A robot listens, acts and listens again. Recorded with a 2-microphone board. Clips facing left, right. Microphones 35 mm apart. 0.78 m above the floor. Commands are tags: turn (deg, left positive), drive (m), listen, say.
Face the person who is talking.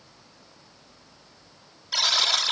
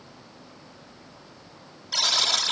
<listen/>
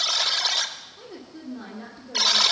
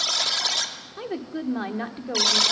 <turn deg="-55"/>
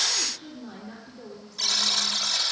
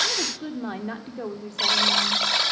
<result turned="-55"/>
<turn deg="-65"/>
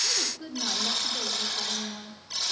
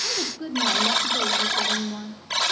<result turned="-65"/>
<turn deg="-20"/>
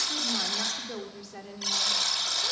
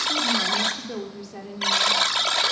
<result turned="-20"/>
<say>Found it: a woman speaking, straight ahead.</say>